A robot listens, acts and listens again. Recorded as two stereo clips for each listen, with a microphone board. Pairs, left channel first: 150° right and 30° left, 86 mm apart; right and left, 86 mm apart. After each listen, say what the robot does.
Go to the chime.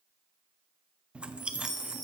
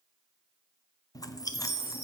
Turn 75° left.
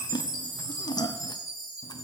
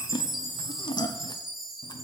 Drive 1.0 m forward.
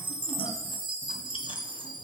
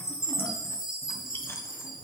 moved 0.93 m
Turn 10° left.
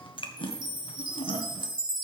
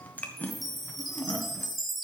Drive 1.0 m forward.
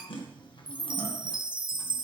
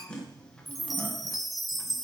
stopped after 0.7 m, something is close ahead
Arrived at the chime, straight ahead.